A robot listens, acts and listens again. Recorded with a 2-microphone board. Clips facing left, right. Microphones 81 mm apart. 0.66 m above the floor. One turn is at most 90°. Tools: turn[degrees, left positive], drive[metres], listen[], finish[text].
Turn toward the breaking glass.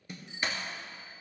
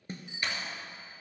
Thought: The breaking glass: about 25° left or 155° left.
Action: turn[25]
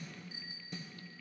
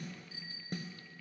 Action: listen[]
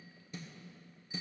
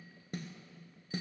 Action: finish[I heard breaking glass, but can't make it out now. It was about straight ahead or 130° left.]